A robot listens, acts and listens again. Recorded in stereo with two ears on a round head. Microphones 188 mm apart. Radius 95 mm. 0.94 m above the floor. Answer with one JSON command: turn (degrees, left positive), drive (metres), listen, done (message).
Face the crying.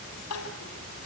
{"turn": 90}
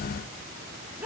{"turn": -10}
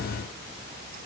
{"listen": true}
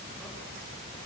{"listen": true}
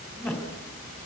{"done": "Facing the crying, 2 to 4 m away."}